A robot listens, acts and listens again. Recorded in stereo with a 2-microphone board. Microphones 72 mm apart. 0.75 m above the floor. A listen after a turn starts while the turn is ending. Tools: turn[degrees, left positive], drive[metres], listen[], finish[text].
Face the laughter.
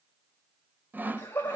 Thought: The laughter: about 25° left or 155° left.
Action: turn[25]
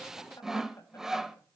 Action: listen[]
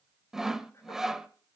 Action: listen[]
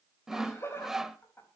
Thought: The laughter: about 30° left or 150° left.
Action: turn[30]
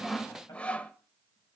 Action: listen[]
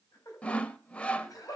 Thought: So it is at 125° left.
Action: turn[125]
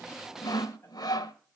Action: listen[]
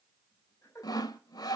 Thought: The laughter is now 40° left.
Action: turn[40]
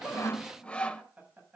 Thought: The laughter is now 20° right.
Action: turn[-20]
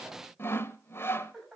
Action: finish[Facing the laughter, over 4 m away.]